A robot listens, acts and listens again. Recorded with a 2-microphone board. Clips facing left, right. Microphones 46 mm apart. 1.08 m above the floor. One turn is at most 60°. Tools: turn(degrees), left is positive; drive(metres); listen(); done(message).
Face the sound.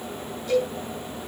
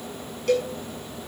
turn(degrees=-60)
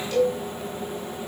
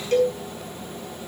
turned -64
turn(degrees=-45)
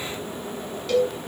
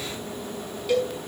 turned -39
turn(degrees=-10)
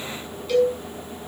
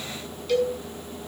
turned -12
done("Facing the cowbell, over 4 m away.")